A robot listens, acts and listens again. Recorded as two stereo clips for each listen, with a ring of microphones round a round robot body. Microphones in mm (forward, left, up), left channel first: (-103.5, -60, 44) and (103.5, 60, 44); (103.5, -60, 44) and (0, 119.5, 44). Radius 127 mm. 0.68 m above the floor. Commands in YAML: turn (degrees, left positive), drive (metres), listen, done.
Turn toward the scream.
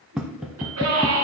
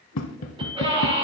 turn: 55
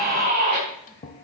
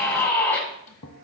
turn: 20
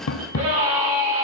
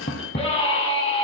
done: "Found it: a scream, straight ahead, over 4 m away."